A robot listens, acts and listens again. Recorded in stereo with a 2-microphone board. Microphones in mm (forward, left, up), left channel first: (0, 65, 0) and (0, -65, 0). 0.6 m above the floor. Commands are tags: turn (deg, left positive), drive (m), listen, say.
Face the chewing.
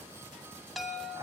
<listen/>
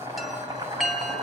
<listen/>
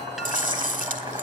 <turn deg="-90"/>
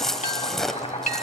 <say>Facing the chewing.</say>